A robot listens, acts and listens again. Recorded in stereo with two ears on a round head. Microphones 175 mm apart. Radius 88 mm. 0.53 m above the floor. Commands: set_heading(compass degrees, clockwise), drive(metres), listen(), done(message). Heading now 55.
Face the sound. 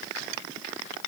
listen()
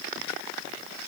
listen()
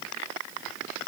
done("I can't make out anything.")